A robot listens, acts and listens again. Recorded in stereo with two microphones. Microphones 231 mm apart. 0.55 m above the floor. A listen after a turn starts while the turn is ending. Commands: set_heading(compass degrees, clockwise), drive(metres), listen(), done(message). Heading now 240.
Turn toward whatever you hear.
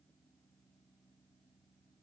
listen()
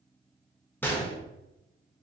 set_heading(210)
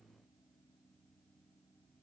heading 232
listen()
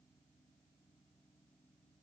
done("I heard a gunshot, but can't make it out now. It was about straight ahead or 165° left.")